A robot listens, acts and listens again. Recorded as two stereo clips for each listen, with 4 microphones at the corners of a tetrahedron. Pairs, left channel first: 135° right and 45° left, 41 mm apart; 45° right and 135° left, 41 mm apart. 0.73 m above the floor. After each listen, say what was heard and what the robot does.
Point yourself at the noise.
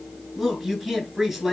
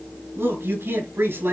The man speaking: 135° left. Turn 135° left.
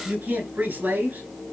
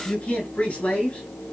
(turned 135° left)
The man speaking is now 15° left. Turn 15° left.
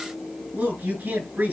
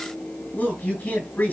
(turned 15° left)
Facing the man speaking.